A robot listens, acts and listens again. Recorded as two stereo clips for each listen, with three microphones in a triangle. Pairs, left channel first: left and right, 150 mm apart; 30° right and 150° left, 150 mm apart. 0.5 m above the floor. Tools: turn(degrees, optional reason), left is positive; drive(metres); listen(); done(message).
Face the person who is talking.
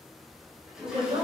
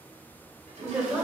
turn(degrees=-130, reason="The woman speaking: 130° right.")
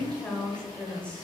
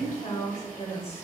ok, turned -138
turn(degrees=10, reason="The woman speaking is now 10° left.")
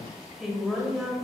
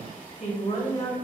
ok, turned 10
done("Found it: a woman speaking, straight ahead, 2 to 4 m away.")